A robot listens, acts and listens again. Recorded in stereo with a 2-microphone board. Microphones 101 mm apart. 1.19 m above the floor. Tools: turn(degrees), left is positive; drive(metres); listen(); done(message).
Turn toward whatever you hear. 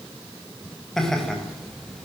turn(degrees=30)
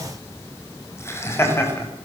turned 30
turn(degrees=155)
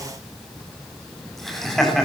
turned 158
done("Found it: laughter, straight ahead.")